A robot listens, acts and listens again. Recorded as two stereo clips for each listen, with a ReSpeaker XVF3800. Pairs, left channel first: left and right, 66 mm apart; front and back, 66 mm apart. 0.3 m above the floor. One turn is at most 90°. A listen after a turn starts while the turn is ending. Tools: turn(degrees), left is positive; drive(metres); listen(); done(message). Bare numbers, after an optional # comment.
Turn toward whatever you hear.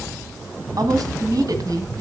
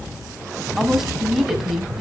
# The woman speaking: 95° right.
turn(-90)
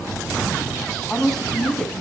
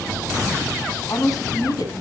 done("Facing the woman speaking, 2 to 4 m away.")